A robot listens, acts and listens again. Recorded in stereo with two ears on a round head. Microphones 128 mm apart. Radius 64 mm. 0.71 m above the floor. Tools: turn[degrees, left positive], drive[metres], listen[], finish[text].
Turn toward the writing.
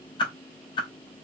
Action: listen[]
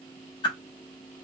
Action: listen[]
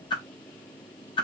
Action: finish[I can't make out writing, only a whoosh.]